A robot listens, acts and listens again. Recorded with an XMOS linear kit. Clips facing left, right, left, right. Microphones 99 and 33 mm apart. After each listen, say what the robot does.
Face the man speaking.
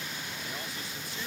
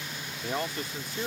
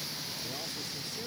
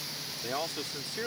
Turn 55° right.
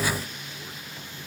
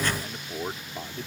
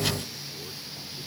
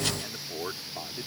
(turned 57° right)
Turn 70° right.
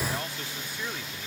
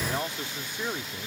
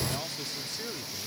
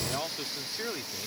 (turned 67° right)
Turn 25° right.
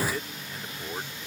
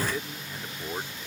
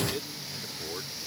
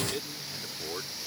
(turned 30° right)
Turn 10° right.
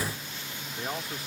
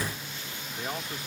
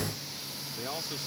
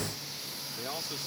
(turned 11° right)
Found it: a man speaking, straight ahead.